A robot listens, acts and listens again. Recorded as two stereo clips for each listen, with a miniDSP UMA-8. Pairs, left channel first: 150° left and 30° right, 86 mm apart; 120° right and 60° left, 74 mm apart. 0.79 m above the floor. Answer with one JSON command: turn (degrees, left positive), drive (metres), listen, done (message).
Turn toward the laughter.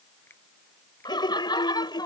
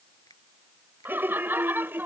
{"turn": 120}
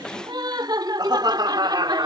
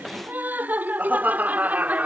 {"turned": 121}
{"done": "Found it: laughter, straight ahead."}